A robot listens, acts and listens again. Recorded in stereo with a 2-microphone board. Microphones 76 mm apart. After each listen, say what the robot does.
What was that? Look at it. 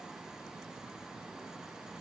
Keep listening.
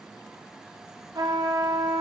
Turn 65° right.
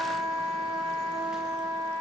Turn 50° right.
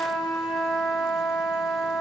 Facing the trumpet.